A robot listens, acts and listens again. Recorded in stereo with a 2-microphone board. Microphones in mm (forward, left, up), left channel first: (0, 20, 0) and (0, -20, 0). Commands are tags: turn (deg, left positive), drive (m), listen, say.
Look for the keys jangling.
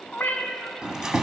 <turn deg="-15"/>
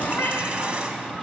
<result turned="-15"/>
<turn deg="-150"/>
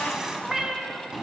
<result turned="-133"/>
<turn deg="-15"/>
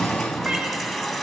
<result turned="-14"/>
<say>Facing the keys jangling, 1 to 2 m away.</say>